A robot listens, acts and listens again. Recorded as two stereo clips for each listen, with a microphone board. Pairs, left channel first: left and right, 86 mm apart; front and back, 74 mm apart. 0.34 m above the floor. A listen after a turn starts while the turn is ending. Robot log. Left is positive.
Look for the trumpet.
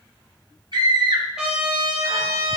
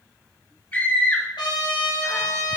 note: The trumpet: 10° right.
cmd yaw -10
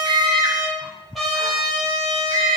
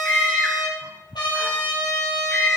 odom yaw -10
end: Found it: a trumpet, straight ahead.